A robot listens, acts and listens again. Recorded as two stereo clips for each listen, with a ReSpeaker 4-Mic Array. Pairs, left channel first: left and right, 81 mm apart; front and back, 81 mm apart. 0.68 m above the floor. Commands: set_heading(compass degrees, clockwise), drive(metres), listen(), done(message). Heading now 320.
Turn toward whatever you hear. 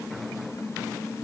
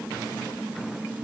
listen()
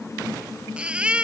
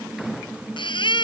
set_heading(335)
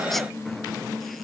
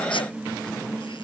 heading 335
listen()
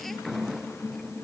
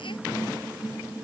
listen()
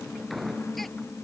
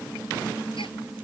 done("Facing where the baby crying came from. I can't hear it now.")